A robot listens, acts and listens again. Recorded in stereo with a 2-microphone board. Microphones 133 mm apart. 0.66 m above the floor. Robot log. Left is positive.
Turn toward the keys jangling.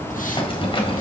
note: The keys jangling: about 40° left or 140° left.
cmd yaw +40
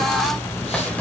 cmd idle
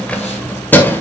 note: So it is at 15° left.
cmd yaw +15
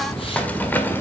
cmd idle
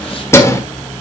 note: The keys jangling is now 20° left.
cmd yaw +20
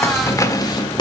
note: The keys jangling is now 35° left.
cmd yaw +35
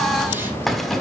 cmd idle
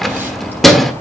end: Facing the keys jangling.